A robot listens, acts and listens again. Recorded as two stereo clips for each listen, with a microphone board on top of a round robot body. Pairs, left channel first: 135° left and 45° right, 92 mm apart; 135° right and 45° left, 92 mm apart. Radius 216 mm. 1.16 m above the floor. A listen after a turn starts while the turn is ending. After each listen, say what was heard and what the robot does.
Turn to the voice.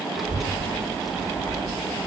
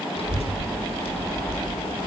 The child speaking: 135° right. Turn 135° right.
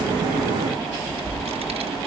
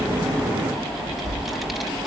The child speaking is now 45° right. Turn 45° right.
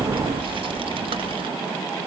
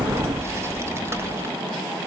The child speaking is now 20° right. Turn 20° right.
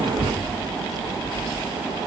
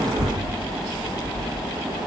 Facing the child speaking, over 4 m away.